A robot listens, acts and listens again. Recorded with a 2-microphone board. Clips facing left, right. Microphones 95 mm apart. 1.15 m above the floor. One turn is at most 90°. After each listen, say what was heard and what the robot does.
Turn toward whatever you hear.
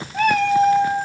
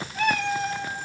The cat meowing: about 50° left or 130° left. Turn 50° left.
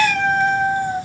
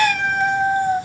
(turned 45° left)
So it is at 15° right. Turn 15° right.
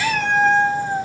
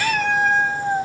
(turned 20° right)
The cat meowing is now 15° right. Turn 15° right.
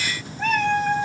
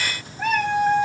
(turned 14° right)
The cat meowing is now 15° right. Turn 15° right.
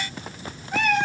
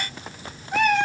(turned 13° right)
The cat meowing is now 10° right. Turn 10° right.
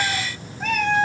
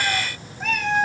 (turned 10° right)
Facing the cat meowing.